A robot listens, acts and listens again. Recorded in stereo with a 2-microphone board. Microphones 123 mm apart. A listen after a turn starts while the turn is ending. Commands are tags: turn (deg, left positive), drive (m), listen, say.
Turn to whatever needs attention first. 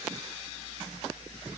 <listen/>
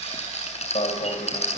<turn deg="60"/>
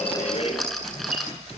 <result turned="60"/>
<turn deg="55"/>
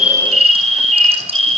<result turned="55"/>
<say>Found it: an alarm, straight ahead.</say>